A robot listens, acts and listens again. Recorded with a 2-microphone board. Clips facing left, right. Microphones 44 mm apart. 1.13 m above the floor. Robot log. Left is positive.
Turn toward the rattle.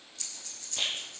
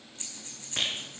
note: The rattle: about 65° right or 115° right.
cmd yaw -65
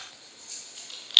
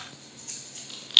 end: Facing the rattle.